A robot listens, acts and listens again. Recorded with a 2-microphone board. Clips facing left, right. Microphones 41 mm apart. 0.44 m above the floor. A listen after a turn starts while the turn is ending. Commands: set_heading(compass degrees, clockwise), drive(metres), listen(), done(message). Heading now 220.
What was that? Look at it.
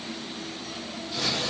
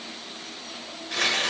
set_heading(285)
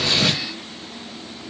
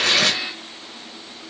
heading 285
listen()
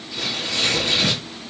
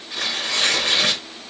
set_heading(330)
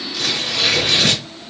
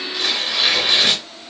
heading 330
set_heading(345)
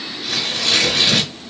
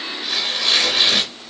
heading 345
set_heading(355)
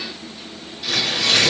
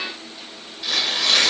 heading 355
done("Facing the tearing paper, over 4 m away.")